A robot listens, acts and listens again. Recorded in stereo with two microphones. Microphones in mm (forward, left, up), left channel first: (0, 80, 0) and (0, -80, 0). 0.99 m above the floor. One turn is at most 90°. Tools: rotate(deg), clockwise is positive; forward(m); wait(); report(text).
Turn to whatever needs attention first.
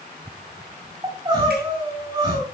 rotate(30)
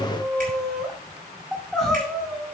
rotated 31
report("Found it: crying, straight ahead, over 4 m away.")